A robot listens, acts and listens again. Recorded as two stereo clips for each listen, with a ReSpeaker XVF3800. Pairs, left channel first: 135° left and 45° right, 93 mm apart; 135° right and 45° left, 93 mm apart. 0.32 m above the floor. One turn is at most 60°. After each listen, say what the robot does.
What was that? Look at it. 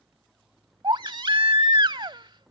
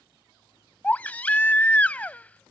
Turn 60° right.
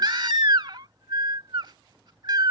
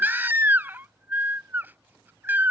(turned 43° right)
Turn 20° right.
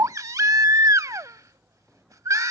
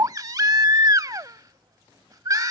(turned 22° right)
Facing the baby crying.